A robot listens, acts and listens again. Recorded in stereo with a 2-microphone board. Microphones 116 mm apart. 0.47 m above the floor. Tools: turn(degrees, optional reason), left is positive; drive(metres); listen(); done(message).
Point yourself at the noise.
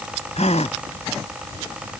turn(degrees=75, reason="The gasp: about 75° left or 105° left.")
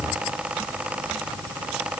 listen()
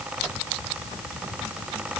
done("I heard a gasp, but can't make it out now. It was about straight ahead or 30° left.")